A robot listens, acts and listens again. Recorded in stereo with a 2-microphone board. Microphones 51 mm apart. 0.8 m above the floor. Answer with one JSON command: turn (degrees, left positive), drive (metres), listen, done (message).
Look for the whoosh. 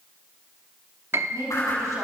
{"turn": 90}
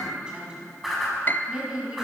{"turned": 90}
{"done": "Facing the whoosh, over 4 m away."}